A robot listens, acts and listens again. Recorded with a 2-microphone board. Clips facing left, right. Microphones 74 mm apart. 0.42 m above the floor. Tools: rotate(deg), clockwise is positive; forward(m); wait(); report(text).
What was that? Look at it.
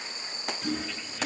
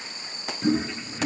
rotate(25)
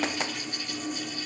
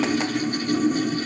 rotate(130)
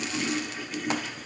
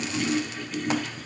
report("Facing the toilet flushing, 1 to 2 m away.")